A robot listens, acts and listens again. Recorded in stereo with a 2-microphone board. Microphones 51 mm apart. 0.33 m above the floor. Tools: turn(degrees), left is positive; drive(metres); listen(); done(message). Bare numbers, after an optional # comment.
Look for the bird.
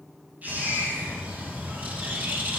# The bird: about 35° right or 145° right.
turn(-35)
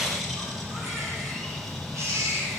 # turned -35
done("Facing the bird, 2 to 4 m away.")